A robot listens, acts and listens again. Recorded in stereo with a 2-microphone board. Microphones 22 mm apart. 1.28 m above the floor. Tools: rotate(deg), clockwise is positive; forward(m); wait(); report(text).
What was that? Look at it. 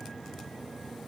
wait()
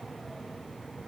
wait()
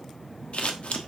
rotate(-65)
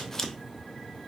rotate(-20)
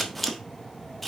report("Found it: scissors, straight ahead.")